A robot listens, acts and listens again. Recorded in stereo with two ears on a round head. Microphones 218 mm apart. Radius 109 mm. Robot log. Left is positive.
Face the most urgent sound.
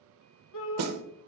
note: The shout: about 55° left or 125° left.
cmd yaw +55
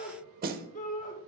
note: So it is at 40° left.
cmd yaw +40
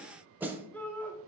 note: The shout is now 10° left.
cmd yaw +10
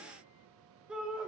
end: Found it: a shout, straight ahead, 1 to 2 m away.